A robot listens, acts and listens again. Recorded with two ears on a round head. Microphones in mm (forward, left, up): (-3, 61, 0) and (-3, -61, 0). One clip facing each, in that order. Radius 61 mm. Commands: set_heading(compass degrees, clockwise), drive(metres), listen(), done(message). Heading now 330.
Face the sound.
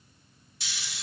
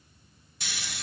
set_heading(15)
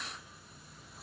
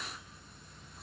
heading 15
listen()
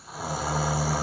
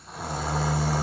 done("Facing the snoring, under 1 m away.")